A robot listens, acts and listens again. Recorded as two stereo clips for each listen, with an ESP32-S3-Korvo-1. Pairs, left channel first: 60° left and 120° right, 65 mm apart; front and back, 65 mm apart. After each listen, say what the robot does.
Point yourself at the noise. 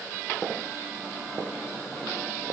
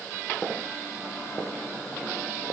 Keep listening.
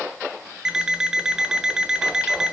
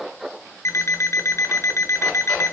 Turn 40° right.
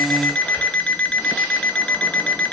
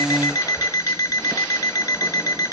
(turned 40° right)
Turn 10° right.
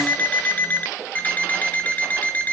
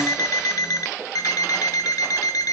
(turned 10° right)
Found it: an alarm clock, straight ahead, 1 to 2 m away.